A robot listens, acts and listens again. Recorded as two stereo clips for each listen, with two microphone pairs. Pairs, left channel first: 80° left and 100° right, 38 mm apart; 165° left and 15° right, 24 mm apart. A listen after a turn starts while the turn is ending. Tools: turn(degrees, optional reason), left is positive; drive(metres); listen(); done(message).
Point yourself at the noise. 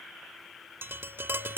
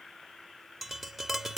turn(degrees=-95, reason="The tapping: 95° right.")
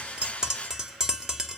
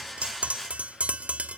turn(degrees=-25, reason="The tapping is now 25° right.")
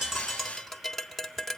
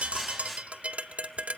done("Facing the tapping.")